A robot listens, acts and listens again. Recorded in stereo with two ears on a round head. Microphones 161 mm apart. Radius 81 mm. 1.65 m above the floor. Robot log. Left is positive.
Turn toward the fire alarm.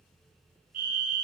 note: The fire alarm: about 50° right or 130° right.
cmd yaw -50
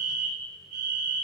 note: So it is at 70° right.
cmd yaw -70
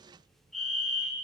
end: Found it: a fire alarm, straight ahead.